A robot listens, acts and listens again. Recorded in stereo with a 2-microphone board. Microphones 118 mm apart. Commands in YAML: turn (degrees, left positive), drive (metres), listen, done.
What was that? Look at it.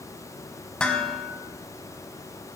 turn: 30
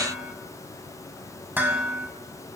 turn: -20
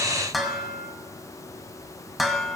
done: "Facing the dishes clattering, 1 to 2 m away."